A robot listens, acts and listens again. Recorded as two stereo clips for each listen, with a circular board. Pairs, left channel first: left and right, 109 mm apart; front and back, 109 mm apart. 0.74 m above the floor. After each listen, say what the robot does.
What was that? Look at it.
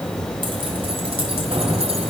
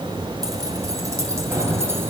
Turn 115° right.
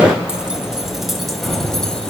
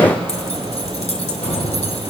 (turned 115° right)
Found it: keys jangling, straight ahead, 2 to 4 m away.